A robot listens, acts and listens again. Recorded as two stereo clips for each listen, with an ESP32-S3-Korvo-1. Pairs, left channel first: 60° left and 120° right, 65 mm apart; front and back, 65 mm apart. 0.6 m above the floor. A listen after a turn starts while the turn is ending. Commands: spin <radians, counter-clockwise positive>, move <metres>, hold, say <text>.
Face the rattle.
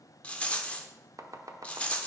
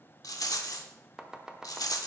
spin -0.17
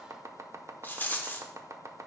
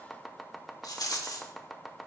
say Found it: a rattle, straight ahead.